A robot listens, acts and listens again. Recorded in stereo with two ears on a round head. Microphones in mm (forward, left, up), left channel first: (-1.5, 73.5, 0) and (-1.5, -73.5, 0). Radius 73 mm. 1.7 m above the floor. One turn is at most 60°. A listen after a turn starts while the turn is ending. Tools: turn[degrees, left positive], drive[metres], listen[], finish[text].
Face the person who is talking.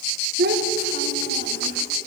Thought: The child speaking: about 60° right or 120° right.
Action: turn[-60]
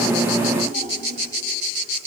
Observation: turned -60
Thought: So it is at 45° right.
Action: turn[-45]
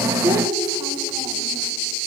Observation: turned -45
Thought: The child speaking is now 25° right.
Action: turn[-25]
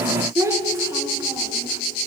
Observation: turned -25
Thought: The child speaking is now 20° right.
Action: turn[-20]
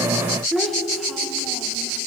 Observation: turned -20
Action: finish[Found it: a child speaking, straight ahead.]